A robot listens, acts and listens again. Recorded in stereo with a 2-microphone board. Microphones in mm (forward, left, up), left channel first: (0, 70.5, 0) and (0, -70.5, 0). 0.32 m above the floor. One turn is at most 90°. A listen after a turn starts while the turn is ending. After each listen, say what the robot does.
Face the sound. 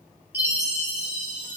Turn 30° right.
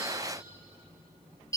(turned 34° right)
Turn 25° left.
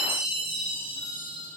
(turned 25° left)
Found it: a chime, straight ahead.